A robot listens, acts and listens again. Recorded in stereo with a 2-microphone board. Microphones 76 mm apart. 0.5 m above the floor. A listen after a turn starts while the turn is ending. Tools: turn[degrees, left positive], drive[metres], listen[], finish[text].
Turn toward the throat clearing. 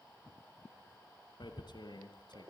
Action: listen[]
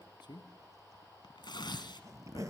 Action: listen[]
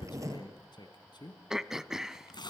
Action: turn[-30]
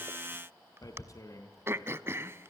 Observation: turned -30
Thought: So it is at 145° right.
Action: turn[-145]
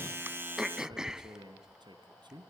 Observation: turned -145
Thought: The throat clearing is now 10° right.
Action: turn[-10]
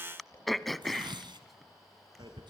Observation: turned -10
Action: finish[Facing the throat clearing, under 1 m away.]